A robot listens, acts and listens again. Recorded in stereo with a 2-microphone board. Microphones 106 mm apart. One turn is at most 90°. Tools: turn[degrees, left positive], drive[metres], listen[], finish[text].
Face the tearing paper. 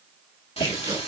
Thought: The tearing paper: about 50° right or 130° right.
Action: turn[-50]
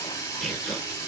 Action: finish[Facing the tearing paper, 1 to 2 m away.]